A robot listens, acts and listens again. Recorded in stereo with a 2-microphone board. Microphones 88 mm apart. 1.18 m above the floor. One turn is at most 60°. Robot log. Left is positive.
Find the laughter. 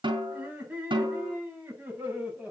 cmd yaw -30
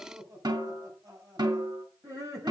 note: So it is at 145° right.
cmd yaw -60
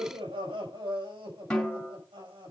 note: The laughter is now 80° right.
cmd yaw -60
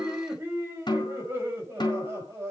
note: The laughter is now 30° right.
cmd yaw -30
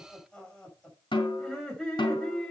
note: The laughter is now 10° left.
cmd yaw +10
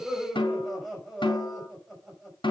end: Found it: laughter, straight ahead.